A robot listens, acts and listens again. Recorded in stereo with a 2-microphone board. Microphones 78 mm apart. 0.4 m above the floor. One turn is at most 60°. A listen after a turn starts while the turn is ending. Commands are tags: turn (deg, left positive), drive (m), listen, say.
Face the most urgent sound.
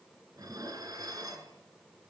<listen/>
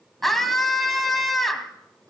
<turn deg="30"/>
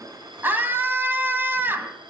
<turn deg="-30"/>
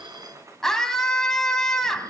<say>Found it: a scream, straight ahead.</say>